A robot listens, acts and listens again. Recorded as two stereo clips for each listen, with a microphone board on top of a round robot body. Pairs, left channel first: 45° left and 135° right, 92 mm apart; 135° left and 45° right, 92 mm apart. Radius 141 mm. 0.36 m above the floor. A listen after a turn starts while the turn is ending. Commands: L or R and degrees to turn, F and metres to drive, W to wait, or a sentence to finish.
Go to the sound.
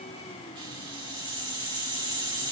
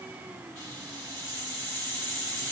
R160
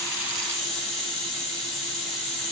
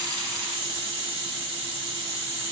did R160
R40
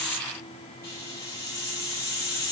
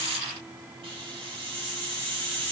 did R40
R15
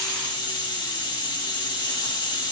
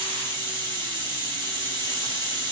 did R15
F1.0
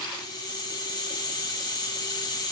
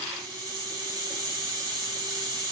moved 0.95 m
F1.0
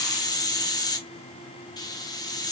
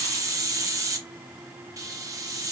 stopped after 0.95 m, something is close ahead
I am next to the hiss.